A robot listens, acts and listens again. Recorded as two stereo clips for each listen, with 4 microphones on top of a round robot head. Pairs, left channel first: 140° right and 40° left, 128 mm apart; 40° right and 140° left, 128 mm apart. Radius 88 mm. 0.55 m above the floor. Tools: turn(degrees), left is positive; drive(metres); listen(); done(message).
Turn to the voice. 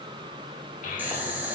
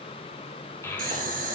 turn(degrees=-110)
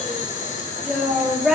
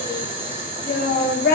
turn(degrees=-45)
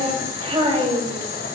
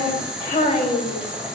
turn(degrees=-10)
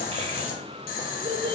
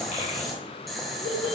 done("Facing the child speaking, 2 to 4 m away.")